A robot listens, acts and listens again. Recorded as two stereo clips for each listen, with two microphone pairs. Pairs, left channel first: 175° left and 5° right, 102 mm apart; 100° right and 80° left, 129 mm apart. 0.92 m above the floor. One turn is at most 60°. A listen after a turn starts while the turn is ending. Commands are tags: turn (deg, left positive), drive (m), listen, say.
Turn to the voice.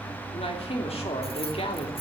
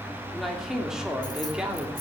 <turn deg="60"/>
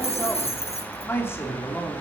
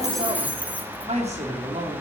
<turn deg="60"/>
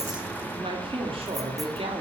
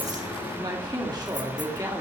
<turn deg="20"/>
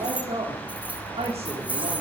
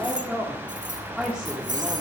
<say>Facing the man speaking.</say>